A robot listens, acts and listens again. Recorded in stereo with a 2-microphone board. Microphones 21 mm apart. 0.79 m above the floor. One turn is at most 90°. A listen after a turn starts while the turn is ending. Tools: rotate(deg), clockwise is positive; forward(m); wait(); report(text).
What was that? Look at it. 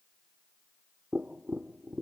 rotate(30)
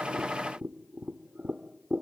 rotate(90)
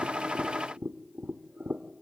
rotate(60)
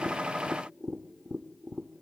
report("Facing the tapping.")